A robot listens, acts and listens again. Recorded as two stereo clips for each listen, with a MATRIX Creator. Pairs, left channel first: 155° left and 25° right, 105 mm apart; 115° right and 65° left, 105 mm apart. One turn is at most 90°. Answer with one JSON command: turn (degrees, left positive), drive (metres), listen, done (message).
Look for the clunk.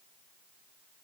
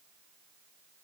{"listen": true}
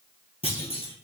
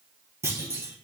{"turn": 90}
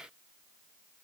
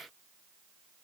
{"turn": 40}
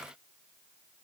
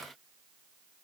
{"done": "Facing where the clunk came from. I can't hear it now."}